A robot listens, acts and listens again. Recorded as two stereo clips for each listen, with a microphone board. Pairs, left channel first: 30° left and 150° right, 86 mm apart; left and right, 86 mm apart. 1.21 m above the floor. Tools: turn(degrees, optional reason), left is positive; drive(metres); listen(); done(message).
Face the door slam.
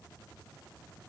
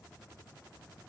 listen()
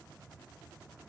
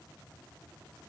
listen()
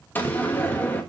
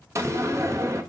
turn(degrees=-35, reason="The door slam: 35° right.")
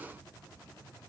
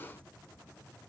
done("Facing where the door slam came from. I can't hear it now.")